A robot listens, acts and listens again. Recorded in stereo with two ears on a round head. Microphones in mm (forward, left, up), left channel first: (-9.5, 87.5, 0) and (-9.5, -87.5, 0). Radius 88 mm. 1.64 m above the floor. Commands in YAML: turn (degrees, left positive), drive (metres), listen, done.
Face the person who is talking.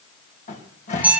listen: true
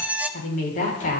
turn: 45
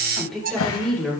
done: "Facing the woman speaking."